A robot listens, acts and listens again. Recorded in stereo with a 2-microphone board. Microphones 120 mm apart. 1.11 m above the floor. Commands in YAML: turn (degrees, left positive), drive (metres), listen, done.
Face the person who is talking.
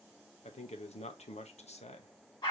turn: 65
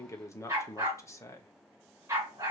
turn: 25
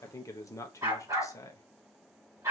turn: 30
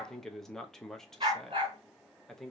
done: "Facing the man speaking."